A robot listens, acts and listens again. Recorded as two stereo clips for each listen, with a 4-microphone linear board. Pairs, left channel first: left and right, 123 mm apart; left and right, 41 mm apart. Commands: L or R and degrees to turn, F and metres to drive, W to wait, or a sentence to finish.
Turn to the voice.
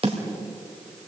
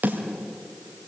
W
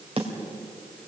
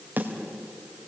W
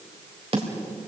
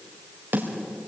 I can't make out anyone speaking to turn to.